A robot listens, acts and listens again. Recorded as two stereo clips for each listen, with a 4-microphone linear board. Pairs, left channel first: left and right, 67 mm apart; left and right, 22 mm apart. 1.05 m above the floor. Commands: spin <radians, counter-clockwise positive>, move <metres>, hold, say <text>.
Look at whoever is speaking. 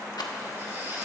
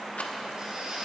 hold
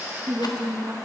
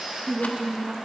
spin -1.22
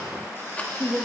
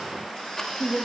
spin -0.61
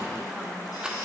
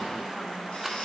hold
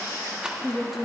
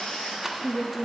say Facing the woman speaking.